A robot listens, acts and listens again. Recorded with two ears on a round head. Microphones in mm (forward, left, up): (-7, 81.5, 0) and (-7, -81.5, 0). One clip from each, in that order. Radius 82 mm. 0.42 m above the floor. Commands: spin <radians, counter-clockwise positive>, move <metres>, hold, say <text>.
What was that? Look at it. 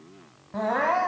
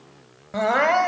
spin -1.05
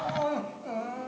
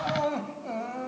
say Facing the crying, 1 to 2 m away.